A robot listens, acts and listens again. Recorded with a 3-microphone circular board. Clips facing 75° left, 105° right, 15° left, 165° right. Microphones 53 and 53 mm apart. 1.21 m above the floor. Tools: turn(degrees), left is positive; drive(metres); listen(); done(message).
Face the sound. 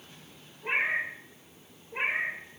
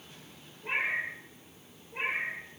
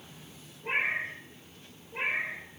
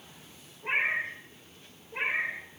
turn(degrees=130)
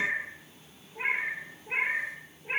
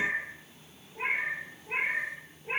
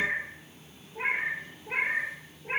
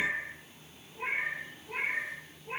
done("Facing the cat meowing.")